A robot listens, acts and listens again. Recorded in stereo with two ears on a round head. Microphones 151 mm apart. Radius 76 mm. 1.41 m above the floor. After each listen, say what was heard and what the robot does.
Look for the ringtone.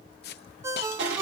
The ringtone: about 15° right or 165° right. Turn 15° right.
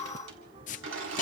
Keep listening.
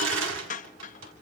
Keep listening.
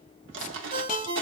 So it is at 150° right. Turn 150° right.
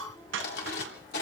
Keep listening.
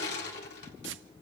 Keep listening.
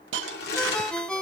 Facing the ringtone, 1 to 2 m away.